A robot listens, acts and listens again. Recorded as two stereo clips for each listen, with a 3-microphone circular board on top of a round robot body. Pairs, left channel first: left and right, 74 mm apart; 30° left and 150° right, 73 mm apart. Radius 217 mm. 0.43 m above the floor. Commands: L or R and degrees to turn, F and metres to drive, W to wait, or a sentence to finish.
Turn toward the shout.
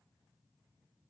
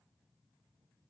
W
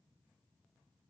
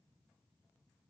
W
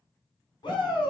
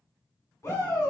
L80
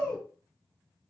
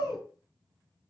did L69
L10
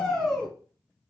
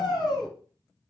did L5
Found it: a shout, straight ahead.